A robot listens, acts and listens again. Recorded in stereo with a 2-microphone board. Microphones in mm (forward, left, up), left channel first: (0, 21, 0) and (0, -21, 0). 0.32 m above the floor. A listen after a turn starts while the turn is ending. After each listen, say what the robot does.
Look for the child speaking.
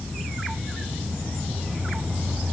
Keep listening.
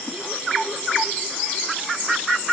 Keep listening.
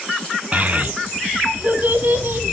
Turn 50° right.
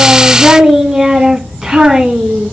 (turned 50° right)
Turn 10° right.
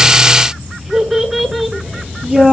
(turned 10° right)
Facing the child speaking.